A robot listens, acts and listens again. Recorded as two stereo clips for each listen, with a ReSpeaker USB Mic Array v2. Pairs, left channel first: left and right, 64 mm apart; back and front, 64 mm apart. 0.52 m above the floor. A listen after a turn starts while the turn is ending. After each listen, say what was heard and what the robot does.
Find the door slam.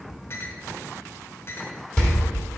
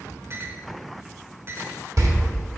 The door slam: 10° left. Turn 10° left.
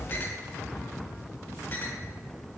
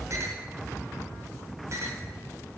Facing where the door slam came from. I can't hear it now.